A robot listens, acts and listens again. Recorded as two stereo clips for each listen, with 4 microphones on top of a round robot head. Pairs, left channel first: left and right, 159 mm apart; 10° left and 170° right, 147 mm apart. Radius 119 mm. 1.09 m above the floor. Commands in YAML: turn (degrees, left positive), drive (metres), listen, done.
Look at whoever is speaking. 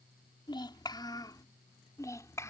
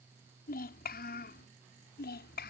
turn: 15
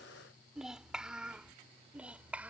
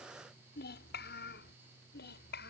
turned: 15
turn: -10
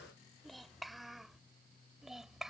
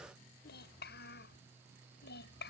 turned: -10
done: "Found it: a child speaking, straight ahead."